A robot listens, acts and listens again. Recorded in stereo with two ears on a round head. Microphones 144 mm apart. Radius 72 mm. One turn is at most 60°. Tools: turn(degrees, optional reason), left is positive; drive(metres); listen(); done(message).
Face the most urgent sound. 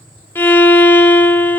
listen()
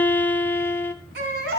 turn(degrees=-60, reason="The baby crying: about 75° right or 105° right.")
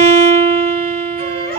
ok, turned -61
turn(degrees=-35, reason="So it is at 35° right.")
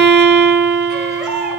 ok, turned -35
done("Found it: a baby crying, straight ahead.")